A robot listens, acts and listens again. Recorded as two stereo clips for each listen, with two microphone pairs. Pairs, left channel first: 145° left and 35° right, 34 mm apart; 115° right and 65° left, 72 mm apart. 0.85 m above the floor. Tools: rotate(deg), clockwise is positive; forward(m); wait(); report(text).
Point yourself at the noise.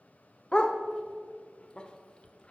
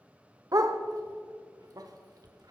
rotate(-90)
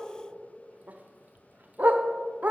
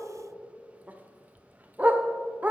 report("Facing the dog barking, under 1 m away.")